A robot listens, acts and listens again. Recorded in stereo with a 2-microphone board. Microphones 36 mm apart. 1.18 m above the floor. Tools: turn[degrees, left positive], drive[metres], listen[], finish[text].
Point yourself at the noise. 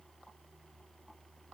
Action: listen[]
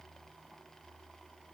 Action: listen[]
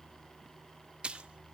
Thought: The splash: about 30° right or 150° right.
Action: turn[-30]
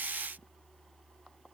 Action: listen[]
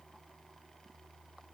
Action: finish[I heard a splash, but can't make it out now. It was about straight ahead or 120° right.]